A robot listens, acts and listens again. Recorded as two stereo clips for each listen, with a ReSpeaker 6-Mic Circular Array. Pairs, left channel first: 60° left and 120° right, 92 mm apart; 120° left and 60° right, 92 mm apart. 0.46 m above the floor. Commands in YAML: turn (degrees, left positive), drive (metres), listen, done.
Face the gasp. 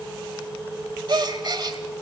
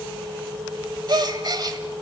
turn: -90
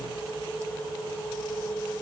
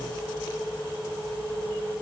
done: "I heard a gasp from this way, but can't make it out now."